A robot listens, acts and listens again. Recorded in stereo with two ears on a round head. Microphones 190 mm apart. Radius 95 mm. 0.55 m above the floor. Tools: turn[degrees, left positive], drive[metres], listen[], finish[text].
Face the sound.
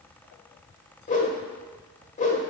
Thought: The whoosh: about 35° left or 145° left.
Action: turn[35]
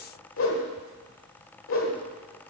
Thought: So it is at 105° left.
Action: turn[105]
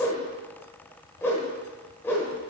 Thought: The whoosh is now 10° left.
Action: turn[10]
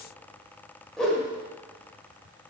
Action: finish[Found it: a whoosh, straight ahead, 1 to 2 m away.]